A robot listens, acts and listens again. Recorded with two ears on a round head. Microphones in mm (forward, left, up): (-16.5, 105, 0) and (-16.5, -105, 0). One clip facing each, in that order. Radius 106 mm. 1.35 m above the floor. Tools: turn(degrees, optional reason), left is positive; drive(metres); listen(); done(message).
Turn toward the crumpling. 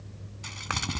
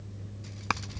turn(degrees=90)
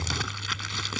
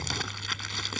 done("Facing the crumpling.")